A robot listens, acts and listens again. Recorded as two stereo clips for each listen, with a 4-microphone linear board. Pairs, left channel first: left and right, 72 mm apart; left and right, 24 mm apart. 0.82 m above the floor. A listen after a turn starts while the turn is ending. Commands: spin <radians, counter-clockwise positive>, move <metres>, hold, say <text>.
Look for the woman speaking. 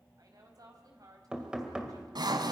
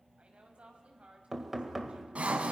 spin -1.05
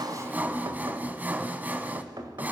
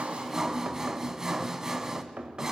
hold
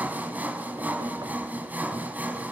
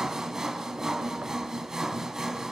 hold
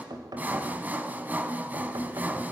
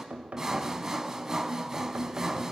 say I heard a woman speaking, but can't make it out now. It was about straight ahead or 60° right.